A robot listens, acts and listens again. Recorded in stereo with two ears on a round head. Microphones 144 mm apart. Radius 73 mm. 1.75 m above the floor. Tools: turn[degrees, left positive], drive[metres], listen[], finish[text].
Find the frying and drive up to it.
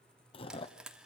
Action: turn[-30]
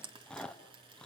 Thought: So it is at 145° right.
Action: turn[-145]
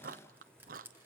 Thought: The frying is now 15° right.
Action: turn[-15]
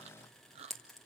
Action: drive[1.0]
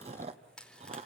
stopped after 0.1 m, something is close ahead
Action: finish[Something is in my way. I am facing the frying but have not reached it.]